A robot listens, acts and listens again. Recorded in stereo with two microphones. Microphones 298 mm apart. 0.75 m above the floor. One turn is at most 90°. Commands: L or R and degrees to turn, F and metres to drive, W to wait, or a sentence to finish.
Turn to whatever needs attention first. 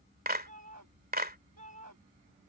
R70
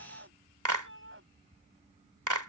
R40
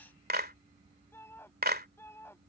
L10
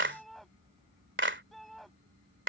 Found it: a shout, straight ahead.